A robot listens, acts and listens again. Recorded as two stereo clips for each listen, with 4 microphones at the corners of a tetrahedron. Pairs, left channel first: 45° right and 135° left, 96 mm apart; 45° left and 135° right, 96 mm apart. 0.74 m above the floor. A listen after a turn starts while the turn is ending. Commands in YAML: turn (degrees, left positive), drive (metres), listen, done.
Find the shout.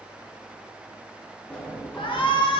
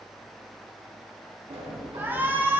turn: -65
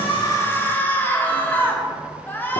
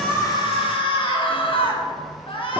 turn: 20
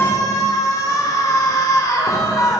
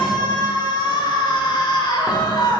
done: "Facing the shout."